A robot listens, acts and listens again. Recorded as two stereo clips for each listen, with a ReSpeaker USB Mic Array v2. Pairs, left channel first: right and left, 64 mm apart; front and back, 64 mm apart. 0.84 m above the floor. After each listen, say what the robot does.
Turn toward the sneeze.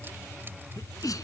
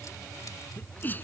Turn 60° right.
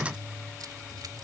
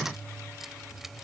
Facing where the sneeze came from. I can't hear it now.